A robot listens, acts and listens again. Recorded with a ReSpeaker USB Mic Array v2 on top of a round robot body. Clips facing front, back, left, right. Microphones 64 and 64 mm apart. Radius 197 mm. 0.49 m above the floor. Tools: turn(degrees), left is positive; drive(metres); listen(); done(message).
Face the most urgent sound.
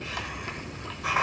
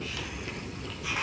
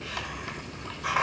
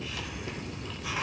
listen()
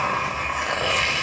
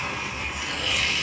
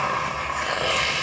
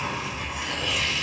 listen()
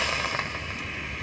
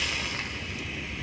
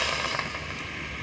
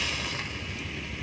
done("I can't make out anything urgent, only a hiss.")